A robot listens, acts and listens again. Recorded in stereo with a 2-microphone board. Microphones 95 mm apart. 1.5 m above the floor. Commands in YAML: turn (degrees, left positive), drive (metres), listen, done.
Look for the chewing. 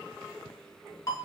listen: true
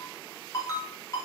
listen: true
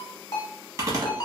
turn: -35
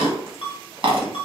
turn: -105
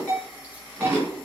turn: -20
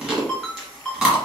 done: "Facing the chewing, 1 to 2 m away."